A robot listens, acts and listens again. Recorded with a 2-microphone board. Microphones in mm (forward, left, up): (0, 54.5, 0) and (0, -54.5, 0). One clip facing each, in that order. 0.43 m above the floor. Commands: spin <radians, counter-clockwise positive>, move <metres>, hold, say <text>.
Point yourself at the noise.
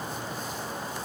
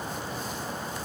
hold
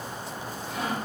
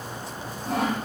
spin -1.57
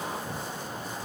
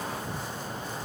hold
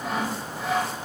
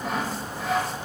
say Facing the sawing.